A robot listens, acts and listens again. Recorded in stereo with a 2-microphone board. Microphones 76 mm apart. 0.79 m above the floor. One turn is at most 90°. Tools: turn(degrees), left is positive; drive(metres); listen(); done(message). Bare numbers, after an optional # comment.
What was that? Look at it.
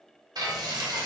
# The frying: about 60° right or 120° right.
turn(-60)
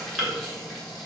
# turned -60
done("Facing the frying.")